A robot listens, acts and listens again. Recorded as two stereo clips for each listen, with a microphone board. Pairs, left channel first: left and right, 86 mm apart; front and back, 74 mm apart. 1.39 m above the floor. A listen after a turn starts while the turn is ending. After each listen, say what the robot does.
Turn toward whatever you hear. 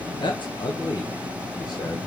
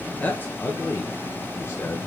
Turn 45° left.
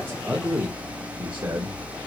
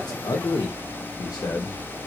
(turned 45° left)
Turn 35° right.
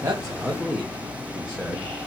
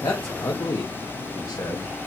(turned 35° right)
Facing the man speaking.